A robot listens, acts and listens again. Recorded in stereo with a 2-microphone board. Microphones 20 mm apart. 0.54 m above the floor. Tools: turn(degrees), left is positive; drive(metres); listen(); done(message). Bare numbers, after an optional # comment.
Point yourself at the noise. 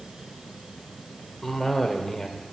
turn(30)
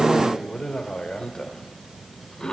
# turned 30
# So it is at 130° left.
turn(130)
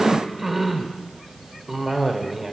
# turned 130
# The cough is now 10° right.
turn(-10)
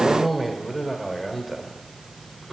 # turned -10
done("Found it: a cough, straight ahead.")